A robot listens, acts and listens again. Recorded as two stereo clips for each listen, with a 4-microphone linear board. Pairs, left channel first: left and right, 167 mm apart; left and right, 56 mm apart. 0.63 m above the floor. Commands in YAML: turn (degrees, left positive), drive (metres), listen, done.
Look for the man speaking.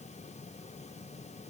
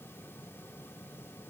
listen: true
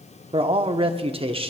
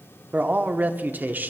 turn: -30
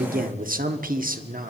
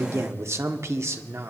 turn: -110
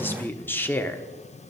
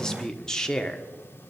turn: 15
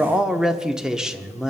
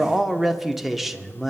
done: "Facing the man speaking."